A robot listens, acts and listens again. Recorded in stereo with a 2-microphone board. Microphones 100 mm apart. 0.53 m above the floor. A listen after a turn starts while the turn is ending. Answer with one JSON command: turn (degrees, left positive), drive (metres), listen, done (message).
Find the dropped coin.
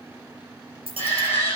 {"turn": -70}
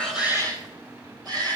{"listen": true}
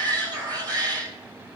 {"done": "I heard a dropped coin, but can't make it out now. It was about straight ahead or 40° right."}